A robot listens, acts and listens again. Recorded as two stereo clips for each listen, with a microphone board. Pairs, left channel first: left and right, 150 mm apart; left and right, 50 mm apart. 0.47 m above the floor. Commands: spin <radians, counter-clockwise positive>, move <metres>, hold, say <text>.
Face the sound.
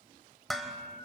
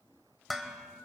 spin 0.52
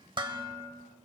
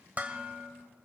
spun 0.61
spin -0.61
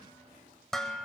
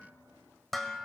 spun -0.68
say Found it: dishes clattering, straight ahead.